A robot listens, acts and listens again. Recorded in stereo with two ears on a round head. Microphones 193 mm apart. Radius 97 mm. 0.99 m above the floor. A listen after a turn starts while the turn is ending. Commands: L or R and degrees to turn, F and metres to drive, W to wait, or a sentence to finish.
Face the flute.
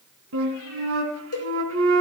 R70
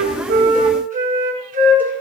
R40
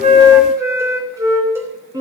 R15
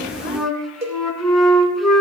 Found it: a flute, straight ahead.